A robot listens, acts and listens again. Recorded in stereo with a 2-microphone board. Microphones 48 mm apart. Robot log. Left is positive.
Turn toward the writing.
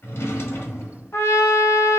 cmd idle
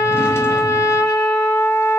cmd idle
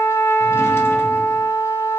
end: I can't make out writing, only a trumpet and a drawer.